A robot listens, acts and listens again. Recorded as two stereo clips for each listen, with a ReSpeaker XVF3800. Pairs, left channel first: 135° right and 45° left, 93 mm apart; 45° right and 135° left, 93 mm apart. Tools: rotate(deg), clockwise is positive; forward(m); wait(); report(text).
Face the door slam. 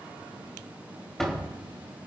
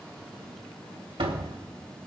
rotate(-140)
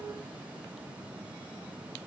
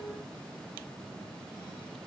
report("I heard a door slam from this way, but can't make it out now.")